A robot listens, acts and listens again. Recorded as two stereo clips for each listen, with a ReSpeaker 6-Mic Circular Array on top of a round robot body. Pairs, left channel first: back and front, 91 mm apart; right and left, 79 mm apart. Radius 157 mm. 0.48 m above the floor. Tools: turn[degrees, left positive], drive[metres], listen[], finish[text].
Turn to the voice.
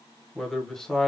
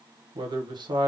Thought: The man speaking: 95° left.
Action: turn[95]
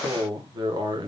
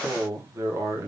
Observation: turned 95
Thought: The man speaking is now 35° left.
Action: turn[35]
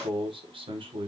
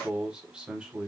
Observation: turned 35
Thought: The man speaking is now 10° left.
Action: turn[10]
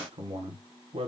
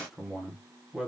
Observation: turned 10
Action: finish[Found it: a man speaking, straight ahead.]